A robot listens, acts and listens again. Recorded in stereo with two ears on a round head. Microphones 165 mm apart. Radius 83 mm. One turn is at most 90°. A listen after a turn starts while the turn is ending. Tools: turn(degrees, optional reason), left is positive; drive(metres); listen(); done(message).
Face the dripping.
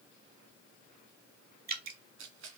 turn(degrees=-55, reason="The dripping: about 55° right or 125° right.")
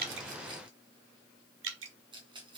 turn(degrees=-70, reason="So it is at 70° right.")
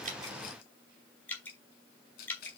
turn(degrees=10, reason="The dripping is now 10° left.")
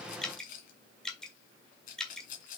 done("Found it: dripping, straight ahead.")